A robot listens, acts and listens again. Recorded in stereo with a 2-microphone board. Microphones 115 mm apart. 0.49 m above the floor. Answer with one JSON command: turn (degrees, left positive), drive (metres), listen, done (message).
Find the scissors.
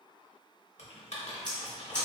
{"turn": 30}
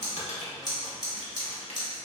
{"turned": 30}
{"turn": 140}
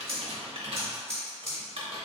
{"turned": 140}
{"done": "Found it: scissors, straight ahead."}